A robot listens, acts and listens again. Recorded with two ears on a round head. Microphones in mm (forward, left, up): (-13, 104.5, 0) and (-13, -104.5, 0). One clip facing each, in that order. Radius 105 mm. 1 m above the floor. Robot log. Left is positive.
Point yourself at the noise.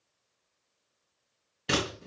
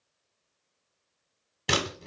note: The scissors: about 65° right or 115° right.
cmd yaw -65
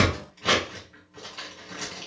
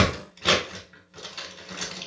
note: So it is at 35° right.
cmd yaw -35
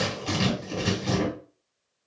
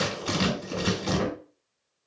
end: Found it: scissors, straight ahead, 1 to 2 m away.